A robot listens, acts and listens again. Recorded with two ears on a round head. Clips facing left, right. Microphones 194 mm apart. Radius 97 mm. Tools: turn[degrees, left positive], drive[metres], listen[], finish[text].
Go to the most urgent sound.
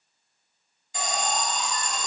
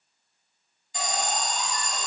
Thought: The alarm: about 70° left or 110° left.
Action: turn[70]
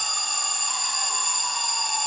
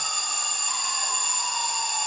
Thought: So it is at 45° left.
Action: turn[45]
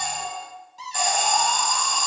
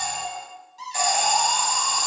Thought: The alarm is now 10° right.
Action: turn[-10]
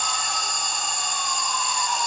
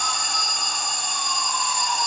Action: drive[1.0]
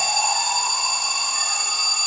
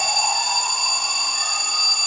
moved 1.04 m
Action: drive[1.0]
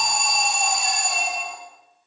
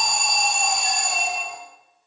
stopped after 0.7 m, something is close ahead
Action: finish[Arrived at the alarm, straight ahead.]